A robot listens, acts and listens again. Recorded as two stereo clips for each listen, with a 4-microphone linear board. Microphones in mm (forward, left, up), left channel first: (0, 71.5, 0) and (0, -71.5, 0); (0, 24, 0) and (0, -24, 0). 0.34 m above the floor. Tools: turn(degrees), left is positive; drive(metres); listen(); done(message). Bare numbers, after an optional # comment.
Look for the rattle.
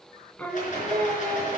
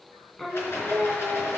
# The rattle: about 55° left or 125° left.
turn(55)
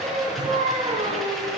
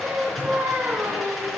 done("Found it: a rattle, straight ahead, over 4 m away.")